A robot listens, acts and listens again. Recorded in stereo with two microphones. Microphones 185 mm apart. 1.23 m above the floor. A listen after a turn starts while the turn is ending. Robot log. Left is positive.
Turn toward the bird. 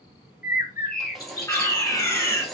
note: The bird: about 55° left or 125° left.
cmd yaw +55
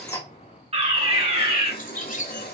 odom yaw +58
note: So it is at 55° left.
cmd yaw +55
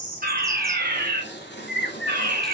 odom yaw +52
end: Facing the bird.